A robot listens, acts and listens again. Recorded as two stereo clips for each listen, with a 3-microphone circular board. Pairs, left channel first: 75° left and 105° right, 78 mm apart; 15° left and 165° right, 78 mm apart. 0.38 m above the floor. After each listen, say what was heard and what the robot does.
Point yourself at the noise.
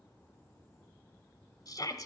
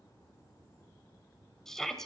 The shout: 100° left. Turn 100° left.
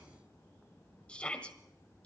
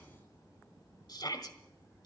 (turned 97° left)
Found it: a shout, straight ahead, 1 to 2 m away.